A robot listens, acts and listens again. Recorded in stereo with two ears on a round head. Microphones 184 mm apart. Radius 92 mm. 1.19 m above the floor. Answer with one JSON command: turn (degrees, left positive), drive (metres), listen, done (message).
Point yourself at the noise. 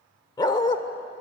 {"turn": 25}
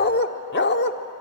{"turn": 125}
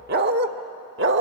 {"turn": -60}
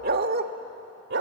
{"turn": -55}
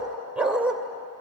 {"done": "Found it: a dog barking, straight ahead."}